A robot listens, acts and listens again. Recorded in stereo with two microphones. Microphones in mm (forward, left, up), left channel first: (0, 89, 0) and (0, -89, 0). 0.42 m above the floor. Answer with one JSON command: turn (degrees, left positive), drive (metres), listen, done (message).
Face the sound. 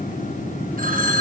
{"turn": -55}
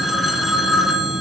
{"done": "Facing the phone ringing."}